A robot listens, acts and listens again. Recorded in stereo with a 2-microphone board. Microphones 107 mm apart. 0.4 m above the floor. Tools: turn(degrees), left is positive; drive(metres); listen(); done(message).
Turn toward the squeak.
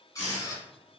turn(degrees=30)
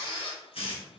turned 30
turn(degrees=120)
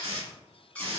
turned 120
turn(degrees=10)
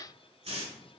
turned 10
listen()
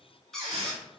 done("Found it: a squeak, straight ahead, 1 to 2 m away.")